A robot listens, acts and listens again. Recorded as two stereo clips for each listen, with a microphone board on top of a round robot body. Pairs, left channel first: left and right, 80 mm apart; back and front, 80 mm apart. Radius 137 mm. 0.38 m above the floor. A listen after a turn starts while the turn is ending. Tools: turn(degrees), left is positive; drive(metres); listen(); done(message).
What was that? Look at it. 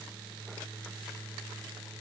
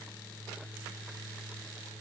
listen()
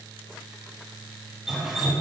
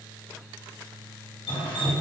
turn(degrees=-175)
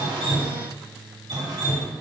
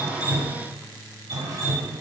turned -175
turn(degrees=-45)
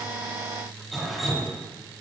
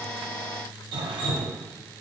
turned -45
done("Facing the dripping, 1 to 2 m away.")